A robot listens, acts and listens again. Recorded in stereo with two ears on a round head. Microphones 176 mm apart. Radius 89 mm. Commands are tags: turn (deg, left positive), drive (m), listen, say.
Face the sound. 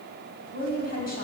<turn deg="50"/>
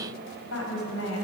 <turn deg="75"/>
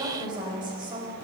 <turn deg="-25"/>
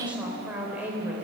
<turn deg="-10"/>
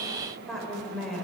<say>Facing the woman speaking, 2 to 4 m away.</say>